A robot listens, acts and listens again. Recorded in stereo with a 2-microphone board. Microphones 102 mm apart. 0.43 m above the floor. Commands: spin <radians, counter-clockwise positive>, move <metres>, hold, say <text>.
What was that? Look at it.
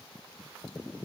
hold
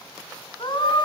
spin 0.87
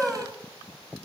say Facing the scream.